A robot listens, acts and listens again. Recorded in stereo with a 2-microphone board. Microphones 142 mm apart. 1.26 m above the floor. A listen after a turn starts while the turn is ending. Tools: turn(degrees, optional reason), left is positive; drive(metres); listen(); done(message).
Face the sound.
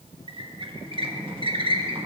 turn(degrees=-40, reason="The squeak: about 40° right or 140° right.")
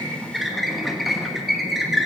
done("Found it: a squeak, straight ahead.")